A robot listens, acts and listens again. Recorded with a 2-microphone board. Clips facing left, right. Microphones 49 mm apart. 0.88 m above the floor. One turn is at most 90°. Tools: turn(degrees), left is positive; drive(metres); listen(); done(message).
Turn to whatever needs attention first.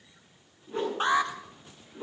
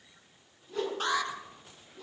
turn(degrees=30)
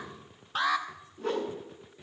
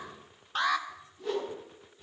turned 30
done("Facing the alarm.")